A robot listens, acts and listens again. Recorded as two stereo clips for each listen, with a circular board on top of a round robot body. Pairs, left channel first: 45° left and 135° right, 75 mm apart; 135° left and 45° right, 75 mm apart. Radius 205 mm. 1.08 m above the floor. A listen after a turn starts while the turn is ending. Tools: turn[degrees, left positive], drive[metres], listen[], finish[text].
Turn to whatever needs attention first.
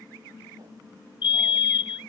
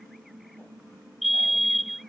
Thought: The fire alarm: 45° left.
Action: turn[45]
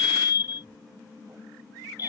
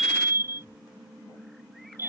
Thought: The fire alarm is now 10° left.
Action: turn[10]
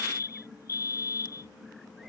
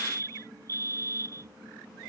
Action: finish[Found it: a fire alarm, straight ahead.]